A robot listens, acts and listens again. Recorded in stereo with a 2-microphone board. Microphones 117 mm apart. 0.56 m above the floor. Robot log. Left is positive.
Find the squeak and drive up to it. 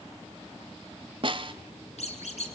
note: The squeak: about 70° left or 110° left.
cmd yaw +70
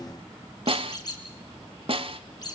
note: So it is at 35° left.
cmd yaw +35
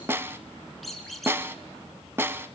cmd fwd 1.0
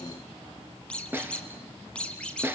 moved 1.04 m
note: The squeak is now 10° left.
cmd yaw +10
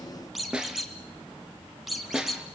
cmd fwd 1.0
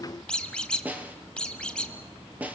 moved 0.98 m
note: The squeak is now 10° left.
cmd yaw +10
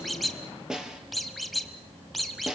cmd fwd 1.0
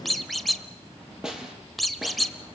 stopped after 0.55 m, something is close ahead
end: I am next to the squeak.